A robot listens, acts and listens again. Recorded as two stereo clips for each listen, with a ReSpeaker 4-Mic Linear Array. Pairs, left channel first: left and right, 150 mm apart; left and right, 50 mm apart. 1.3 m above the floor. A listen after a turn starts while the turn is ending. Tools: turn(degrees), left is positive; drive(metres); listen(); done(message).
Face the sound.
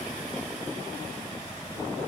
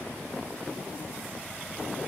listen()
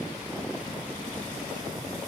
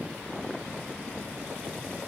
listen()
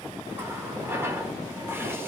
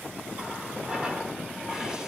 turn(degrees=-15)
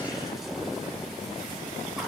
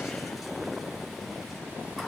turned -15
listen()
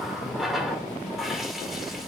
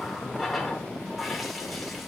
done("Found it: a running tap, straight ahead, 2 to 4 m away.")